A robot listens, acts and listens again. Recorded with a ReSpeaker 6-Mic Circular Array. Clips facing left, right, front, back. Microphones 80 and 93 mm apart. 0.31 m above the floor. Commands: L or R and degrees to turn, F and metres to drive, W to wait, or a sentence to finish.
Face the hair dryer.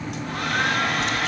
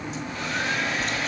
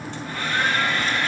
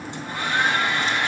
L110
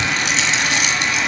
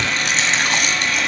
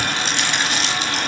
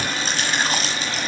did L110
L20
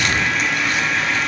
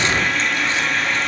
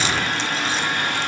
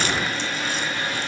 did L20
Found it: a hair dryer, straight ahead, 2 to 4 m away.